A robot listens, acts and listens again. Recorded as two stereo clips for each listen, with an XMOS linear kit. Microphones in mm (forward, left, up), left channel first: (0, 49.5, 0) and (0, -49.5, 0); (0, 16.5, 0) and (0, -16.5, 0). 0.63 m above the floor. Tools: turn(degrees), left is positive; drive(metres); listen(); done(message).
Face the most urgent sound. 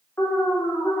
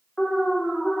turn(degrees=30)
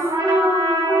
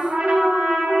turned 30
done("Found it: an alarm, straight ahead, 1 to 2 m away.")